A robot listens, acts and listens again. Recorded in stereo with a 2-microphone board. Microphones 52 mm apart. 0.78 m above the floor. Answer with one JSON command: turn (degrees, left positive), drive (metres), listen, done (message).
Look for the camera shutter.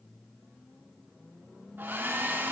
{"listen": true}
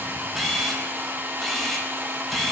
{"turn": 30}
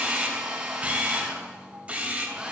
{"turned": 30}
{"turn": -25}
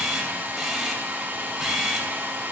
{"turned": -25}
{"done": "Facing the camera shutter, 2 to 4 m away."}